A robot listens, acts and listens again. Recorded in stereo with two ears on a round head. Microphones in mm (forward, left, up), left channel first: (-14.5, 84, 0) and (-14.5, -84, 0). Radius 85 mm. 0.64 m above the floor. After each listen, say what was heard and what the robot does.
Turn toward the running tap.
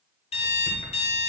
Keep listening.
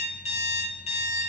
Keep listening.
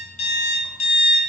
I can't make out a running tap to turn to.